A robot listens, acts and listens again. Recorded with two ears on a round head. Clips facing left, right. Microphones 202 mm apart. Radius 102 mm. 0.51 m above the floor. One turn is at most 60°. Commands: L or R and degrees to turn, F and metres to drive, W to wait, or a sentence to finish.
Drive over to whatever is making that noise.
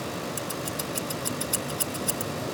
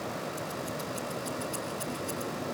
L60
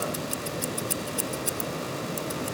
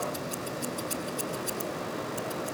L35
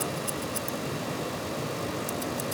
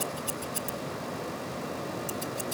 F1.0
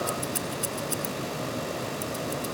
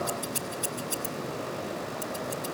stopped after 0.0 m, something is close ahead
L10
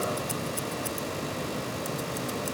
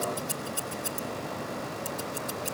Blocked. The scissors is further on, straight ahead.